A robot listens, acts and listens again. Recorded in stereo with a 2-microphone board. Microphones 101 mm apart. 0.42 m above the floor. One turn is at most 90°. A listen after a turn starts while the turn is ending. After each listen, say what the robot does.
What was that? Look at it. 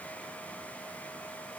Keep listening.
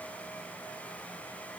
Keep listening.
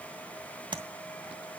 Turn 50° right.
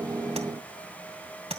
Turn 80° right.
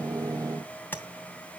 Turn 20° left.
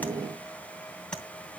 Turn 10° left.
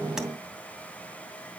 Keep listening.
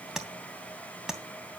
Facing the tapping.